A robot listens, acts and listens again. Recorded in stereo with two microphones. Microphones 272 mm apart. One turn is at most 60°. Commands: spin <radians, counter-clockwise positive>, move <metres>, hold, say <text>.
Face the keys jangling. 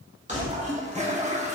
spin -0.44
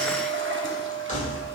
spin 0.52
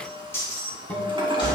spin 0.35
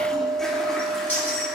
say Facing the keys jangling, 2 to 4 m away.